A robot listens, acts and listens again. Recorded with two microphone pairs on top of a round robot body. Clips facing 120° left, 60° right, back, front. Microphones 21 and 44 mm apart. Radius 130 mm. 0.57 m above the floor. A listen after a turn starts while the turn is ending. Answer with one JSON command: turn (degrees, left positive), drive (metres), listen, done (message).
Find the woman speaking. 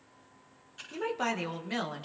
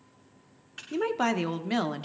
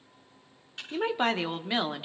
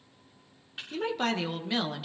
{"turn": -120}
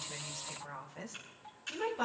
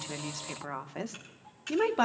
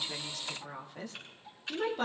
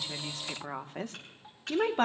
{"turn": -40}
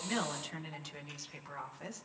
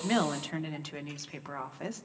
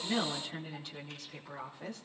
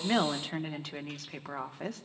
{"turn": -10}
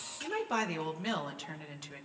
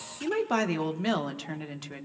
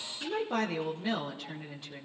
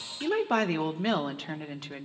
{"done": "Facing the woman speaking."}